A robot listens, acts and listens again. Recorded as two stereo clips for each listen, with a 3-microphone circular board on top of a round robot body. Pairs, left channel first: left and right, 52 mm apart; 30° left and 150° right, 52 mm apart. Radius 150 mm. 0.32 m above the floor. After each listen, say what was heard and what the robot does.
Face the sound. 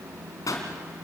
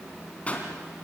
The pop: 95° left. Turn 95° left.
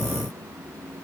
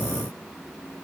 Facing where the pop came from. I can't hear it now.